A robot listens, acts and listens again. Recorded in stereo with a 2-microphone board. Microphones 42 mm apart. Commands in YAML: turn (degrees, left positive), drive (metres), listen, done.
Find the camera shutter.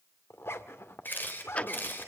turn: 50
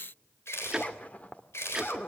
turn: 75
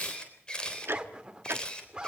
turn: 20
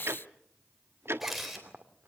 done: "Found it: a camera shutter, straight ahead, 2 to 4 m away."